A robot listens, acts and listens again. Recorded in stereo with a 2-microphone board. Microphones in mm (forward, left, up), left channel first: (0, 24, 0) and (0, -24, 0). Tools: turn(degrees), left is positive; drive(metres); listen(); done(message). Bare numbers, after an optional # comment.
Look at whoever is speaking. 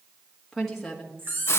turn(30)
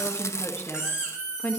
# So it is at 145° left.
turn(145)
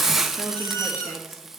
listen()
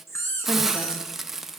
listen()
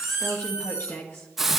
# The woman speaking is now 55° left.
turn(55)
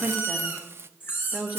done("Found it: a woman speaking, straight ahead, 1 to 2 m away.")